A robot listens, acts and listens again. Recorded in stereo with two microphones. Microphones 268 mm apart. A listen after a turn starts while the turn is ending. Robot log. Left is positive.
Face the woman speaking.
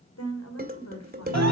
cmd yaw +90
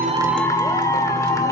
cmd idle
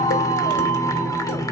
cmd idle
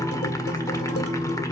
end: Facing where the woman speaking came from. I can't hear it now.